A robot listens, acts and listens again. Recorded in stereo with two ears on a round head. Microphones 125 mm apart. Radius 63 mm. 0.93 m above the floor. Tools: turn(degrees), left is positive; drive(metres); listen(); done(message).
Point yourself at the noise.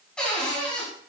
turn(degrees=30)
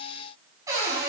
turn(degrees=-25)
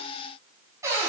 turn(degrees=-20)
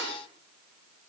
done("Found it: a cupboard door, straight ahead, over 4 m away.")